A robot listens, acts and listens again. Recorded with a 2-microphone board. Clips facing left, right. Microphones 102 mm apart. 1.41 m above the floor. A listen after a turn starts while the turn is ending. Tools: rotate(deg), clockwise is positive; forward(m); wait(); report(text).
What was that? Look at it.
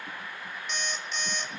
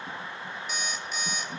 rotate(30)
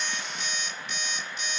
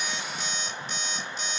rotate(145)
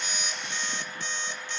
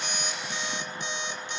rotate(20)
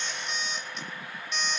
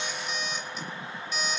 report("Found it: an alarm clock, straight ahead, 1 to 2 m away.")